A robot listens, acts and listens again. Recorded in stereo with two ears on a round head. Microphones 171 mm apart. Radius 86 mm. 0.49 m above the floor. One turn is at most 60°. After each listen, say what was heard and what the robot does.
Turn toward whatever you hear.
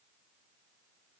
Keep listening.
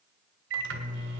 The microwave: about 65° right or 115° right. Turn 60° right.
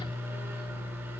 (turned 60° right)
So it is at 15° right. Turn 15° right.
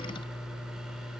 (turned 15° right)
Found it: a microwave, straight ahead.